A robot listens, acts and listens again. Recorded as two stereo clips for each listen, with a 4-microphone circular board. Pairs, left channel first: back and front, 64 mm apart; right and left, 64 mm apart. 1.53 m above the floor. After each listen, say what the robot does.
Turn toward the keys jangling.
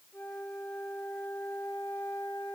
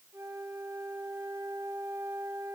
Keep listening.
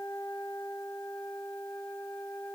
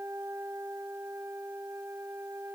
Keep listening.
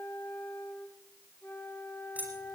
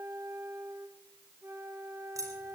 Turn 65° left.
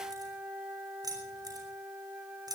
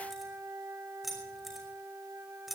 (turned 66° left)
Facing the keys jangling, over 4 m away.